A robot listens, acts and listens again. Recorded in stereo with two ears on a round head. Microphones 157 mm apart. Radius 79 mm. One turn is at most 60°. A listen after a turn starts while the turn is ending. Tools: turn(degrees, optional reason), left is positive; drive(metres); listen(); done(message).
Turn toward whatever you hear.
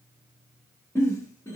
turn(degrees=15, reason="The giggle: about 15° left or 165° left.")
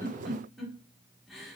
done("Found it: a giggle, straight ahead, 1 to 2 m away.")